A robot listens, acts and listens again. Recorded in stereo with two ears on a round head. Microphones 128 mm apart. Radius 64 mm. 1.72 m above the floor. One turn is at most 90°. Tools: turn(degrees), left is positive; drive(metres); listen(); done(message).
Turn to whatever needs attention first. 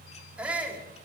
turn(degrees=-30)
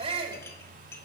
turn(degrees=-90)
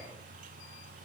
turn(degrees=-50)
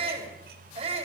turn(degrees=-40)
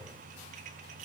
listen()
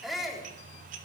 done("Facing the shout, over 4 m away.")